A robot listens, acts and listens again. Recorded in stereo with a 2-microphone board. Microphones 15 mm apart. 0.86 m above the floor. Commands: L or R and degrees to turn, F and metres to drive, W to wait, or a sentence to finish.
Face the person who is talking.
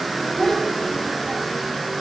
L50
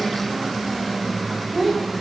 R20
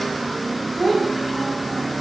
R15
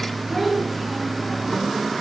R10
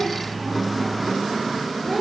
Facing the child speaking, over 4 m away.